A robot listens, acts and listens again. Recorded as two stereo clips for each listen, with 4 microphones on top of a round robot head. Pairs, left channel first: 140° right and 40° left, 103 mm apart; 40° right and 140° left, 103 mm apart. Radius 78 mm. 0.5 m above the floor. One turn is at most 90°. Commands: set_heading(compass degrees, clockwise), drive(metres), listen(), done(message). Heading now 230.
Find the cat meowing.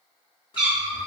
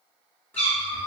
set_heading(270)
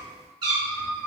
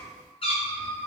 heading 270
set_heading(285)
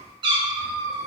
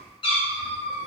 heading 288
set_heading(303)
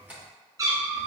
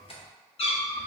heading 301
set_heading(326)
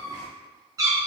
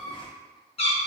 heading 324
set_heading(344)
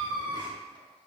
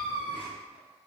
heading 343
set_heading(353)
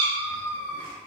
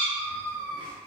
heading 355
done("Found it: a cat meowing, straight ahead.")